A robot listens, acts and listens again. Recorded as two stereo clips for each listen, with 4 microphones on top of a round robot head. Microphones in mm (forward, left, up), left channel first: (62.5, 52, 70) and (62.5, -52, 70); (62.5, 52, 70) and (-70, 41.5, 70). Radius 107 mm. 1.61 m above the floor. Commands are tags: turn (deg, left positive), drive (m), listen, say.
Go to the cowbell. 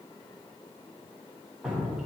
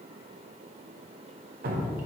<listen/>
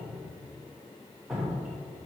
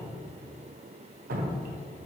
<listen/>
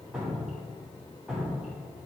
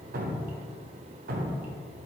<say>I can't make out a cowbell, only dripping.</say>